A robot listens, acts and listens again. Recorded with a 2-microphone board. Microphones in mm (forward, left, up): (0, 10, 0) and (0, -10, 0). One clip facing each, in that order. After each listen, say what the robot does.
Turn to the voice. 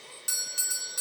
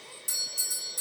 Keep listening.
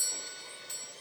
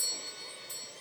Keep listening.
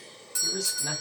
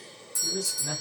Turn 55° left.
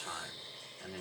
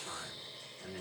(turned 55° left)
Turn 65° left.
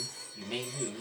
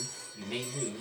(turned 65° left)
Turn 25° left.
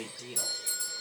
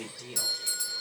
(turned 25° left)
Turn 15° left.
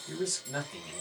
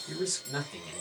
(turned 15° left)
Facing the man speaking, 1 to 2 m away.